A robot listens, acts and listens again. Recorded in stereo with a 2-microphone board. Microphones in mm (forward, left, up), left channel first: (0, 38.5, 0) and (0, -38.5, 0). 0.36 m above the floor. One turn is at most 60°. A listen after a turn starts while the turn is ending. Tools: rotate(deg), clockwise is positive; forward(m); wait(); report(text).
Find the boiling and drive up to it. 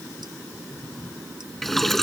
rotate(-30)
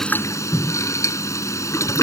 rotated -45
rotate(-60)
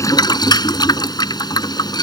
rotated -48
rotate(-60)
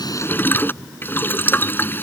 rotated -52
rotate(-30)
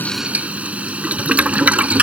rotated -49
rotate(20)
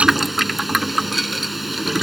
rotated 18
forward(1.0)
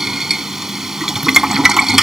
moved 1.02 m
forward(1.0)
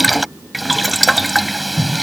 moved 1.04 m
forward(1.0)
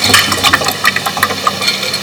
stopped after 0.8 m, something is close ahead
report("I am next to the boiling.")